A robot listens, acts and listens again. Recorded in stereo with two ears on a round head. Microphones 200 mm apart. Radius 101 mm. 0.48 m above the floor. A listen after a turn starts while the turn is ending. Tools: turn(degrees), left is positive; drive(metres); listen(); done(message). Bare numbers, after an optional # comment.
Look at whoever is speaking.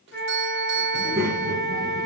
turn(-30)
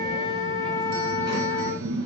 # So it is at 125° right.
turn(-125)
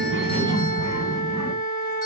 # The child speaking is now 15° right.
turn(-15)
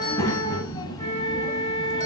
# The child speaking is now 15° left.
turn(15)
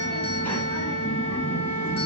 done("Facing the child speaking.")